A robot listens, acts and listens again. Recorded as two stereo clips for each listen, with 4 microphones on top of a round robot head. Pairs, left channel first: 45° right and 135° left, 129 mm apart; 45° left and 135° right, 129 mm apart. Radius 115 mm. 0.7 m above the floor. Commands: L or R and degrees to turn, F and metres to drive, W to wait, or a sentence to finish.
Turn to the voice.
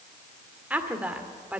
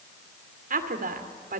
R145
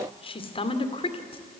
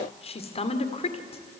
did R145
Facing the woman speaking, 2 to 4 m away.